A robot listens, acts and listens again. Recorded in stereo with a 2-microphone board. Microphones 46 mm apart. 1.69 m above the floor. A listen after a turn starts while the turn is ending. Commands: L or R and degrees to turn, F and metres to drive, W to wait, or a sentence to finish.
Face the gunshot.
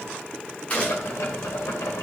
L30
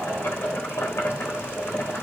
W
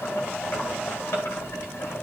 I heard a gunshot, but can't make it out now. It was about straight ahead or 120° left.